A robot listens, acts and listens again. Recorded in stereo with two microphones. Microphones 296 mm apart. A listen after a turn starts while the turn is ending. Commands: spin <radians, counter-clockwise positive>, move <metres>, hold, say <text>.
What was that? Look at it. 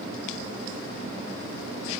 hold
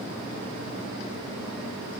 hold
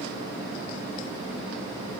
say I can't make out anything.